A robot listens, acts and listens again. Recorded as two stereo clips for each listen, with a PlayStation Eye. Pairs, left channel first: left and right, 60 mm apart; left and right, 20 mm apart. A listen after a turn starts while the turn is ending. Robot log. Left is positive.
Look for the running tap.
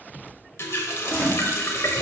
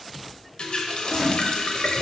note: The running tap: about 45° left or 135° left.
cmd yaw +45
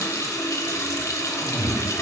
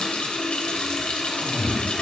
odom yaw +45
note: So it is at 85° left.
cmd yaw +85
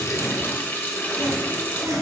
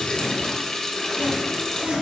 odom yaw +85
note: The running tap is now 35° left.
cmd yaw +35
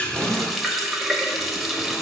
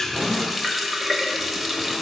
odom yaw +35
end: Facing the running tap.